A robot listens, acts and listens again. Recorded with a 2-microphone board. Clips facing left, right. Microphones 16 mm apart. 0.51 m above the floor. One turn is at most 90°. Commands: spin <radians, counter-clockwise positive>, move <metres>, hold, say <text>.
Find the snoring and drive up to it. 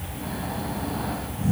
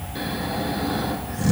spin -1.22
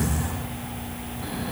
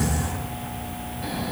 move 1.0
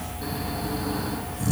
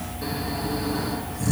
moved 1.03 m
move 1.0
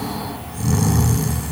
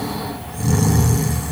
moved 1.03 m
spin 0.17
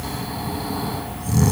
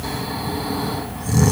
move 1.0
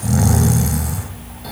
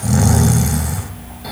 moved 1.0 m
move 1.0
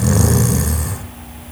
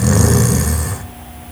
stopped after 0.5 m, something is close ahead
say I am next to the snoring.